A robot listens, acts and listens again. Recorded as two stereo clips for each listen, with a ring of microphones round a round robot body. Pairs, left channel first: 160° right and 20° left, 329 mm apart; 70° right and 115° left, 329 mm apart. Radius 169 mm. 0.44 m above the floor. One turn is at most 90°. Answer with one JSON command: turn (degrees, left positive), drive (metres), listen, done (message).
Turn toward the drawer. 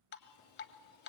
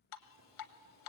{"listen": true}
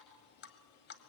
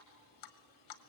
{"listen": true}
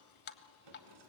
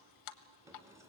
{"turn": 30}
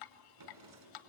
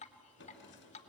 {"turn": -10}
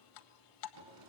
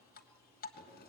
{"done": "Facing the drawer."}